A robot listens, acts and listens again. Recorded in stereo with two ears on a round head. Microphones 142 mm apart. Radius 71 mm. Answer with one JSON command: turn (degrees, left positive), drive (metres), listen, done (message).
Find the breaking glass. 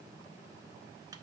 {"listen": true}
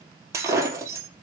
{"turn": -20}
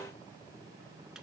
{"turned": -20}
{"listen": true}
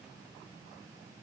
{"done": "I heard breaking glass, but can't make it out now. It was about straight ahead or 140° right."}